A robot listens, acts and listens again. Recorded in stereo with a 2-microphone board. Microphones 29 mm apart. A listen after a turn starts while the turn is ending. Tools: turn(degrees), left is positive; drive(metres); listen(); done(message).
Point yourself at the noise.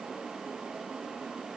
listen()
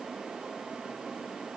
listen()
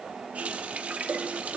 turn(degrees=-65)
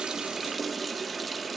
done("Found it: a running tap, straight ahead, 1 to 2 m away.")